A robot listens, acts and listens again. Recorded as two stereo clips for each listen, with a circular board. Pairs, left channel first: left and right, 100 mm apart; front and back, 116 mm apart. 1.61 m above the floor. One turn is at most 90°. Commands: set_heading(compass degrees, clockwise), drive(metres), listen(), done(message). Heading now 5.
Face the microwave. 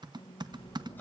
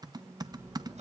set_heading(275)
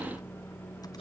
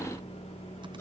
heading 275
set_heading(250)
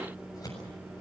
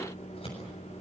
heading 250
set_heading(260)
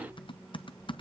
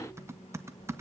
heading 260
listen()
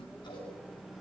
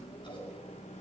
listen()
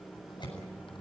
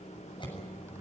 done("Found it: a microwave, straight ahead, 1 to 2 m away.")